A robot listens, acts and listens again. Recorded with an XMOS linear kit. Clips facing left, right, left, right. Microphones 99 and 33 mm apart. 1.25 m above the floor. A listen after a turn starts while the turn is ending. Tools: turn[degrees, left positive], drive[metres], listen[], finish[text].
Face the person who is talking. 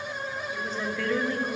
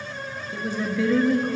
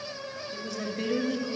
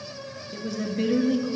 Action: turn[-30]
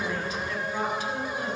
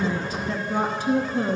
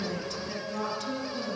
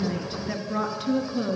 Thought: So it is at 135° right.
Action: turn[-135]
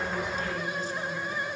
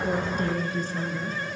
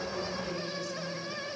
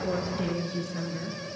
Thought: The woman speaking is now 35° right.
Action: turn[-35]
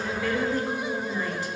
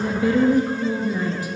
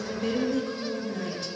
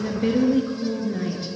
Thought: The woman speaking is now 10° right.
Action: turn[-10]
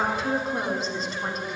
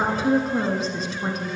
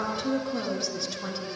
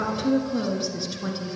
Action: finish[Facing the woman speaking, 1 to 2 m away.]